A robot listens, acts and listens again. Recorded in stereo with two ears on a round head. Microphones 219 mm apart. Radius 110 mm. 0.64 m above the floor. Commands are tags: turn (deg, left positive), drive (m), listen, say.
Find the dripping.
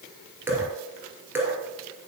<turn deg="-30"/>
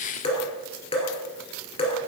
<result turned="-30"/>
<turn deg="25"/>
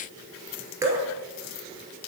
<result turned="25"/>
<turn deg="-15"/>
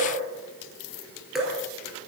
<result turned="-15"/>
<say>Found it: dripping, straight ahead.</say>